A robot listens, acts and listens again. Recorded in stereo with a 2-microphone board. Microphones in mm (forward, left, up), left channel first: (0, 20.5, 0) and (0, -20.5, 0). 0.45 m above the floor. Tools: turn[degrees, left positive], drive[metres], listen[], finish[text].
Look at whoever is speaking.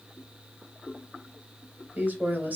Thought: The woman speaking: about 45° right or 135° right.
Action: turn[-45]
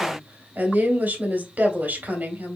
Thought: So it is at 80° right.
Action: turn[-80]
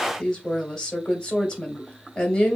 Thought: The woman speaking is now 20° left.
Action: turn[20]
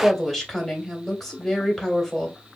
Action: finish[Facing the woman speaking, 2 to 4 m away.]